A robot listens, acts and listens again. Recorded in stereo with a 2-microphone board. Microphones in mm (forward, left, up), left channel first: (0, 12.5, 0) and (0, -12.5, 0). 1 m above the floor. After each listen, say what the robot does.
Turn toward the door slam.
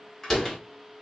Turn 30° left.
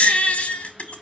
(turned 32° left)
Keep listening.
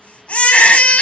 I heard a door slam, but can't make it out now. It was about 20° right or 135° left.